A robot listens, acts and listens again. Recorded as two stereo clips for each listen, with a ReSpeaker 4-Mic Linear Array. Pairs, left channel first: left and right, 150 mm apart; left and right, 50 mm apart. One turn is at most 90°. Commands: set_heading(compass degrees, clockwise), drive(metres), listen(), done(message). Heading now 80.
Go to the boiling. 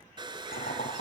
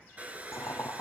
set_heading(5)
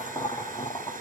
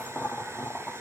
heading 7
set_heading(337)
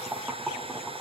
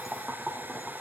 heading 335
drive(1.0)
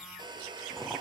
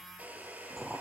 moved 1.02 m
drive(1.0)
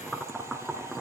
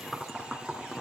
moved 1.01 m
drive(1.0)
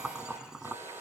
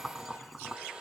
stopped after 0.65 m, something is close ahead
done("Arrived at the boiling, straight ahead.")